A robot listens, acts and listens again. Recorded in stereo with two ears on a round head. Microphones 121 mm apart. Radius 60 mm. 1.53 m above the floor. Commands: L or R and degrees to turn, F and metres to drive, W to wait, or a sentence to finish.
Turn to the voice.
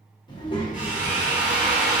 L35
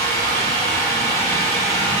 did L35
W
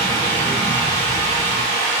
W
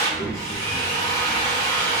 L105
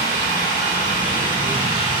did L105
W
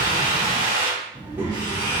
R15
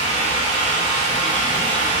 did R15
W
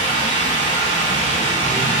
W
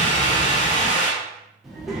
Found it: a child speaking, straight ahead.